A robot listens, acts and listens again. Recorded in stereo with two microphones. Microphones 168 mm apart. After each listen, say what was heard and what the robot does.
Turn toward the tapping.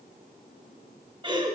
Keep listening.
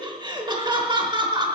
Keep listening.
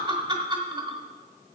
I can't make out tapping, only laughter.